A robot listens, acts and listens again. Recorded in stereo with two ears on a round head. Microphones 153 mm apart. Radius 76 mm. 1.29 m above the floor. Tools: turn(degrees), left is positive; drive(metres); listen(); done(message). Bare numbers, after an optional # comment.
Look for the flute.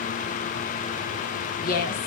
listen()
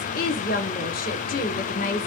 listen()
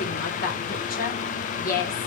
done("I can't make out a flute to turn to.")